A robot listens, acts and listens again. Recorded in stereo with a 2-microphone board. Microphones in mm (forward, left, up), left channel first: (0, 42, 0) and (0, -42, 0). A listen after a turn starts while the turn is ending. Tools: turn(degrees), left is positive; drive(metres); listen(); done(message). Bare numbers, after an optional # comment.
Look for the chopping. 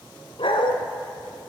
listen()
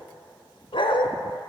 listen()
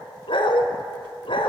done("I can't make out chopping, only a dog barking.")